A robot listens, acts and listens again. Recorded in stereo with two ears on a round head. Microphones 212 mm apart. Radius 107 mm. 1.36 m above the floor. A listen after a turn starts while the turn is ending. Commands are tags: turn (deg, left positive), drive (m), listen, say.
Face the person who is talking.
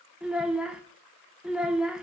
<turn deg="-30"/>
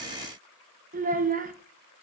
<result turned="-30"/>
<turn deg="-145"/>
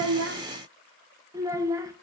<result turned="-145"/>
<turn deg="-15"/>
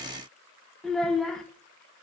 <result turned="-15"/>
<say>Facing the child speaking, under 1 m away.</say>